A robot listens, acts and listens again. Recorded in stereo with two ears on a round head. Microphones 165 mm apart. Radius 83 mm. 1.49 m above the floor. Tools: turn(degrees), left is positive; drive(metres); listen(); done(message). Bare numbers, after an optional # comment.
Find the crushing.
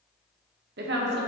listen()
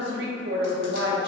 listen()
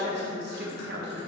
done("I can't make out crushing, only a woman speaking.")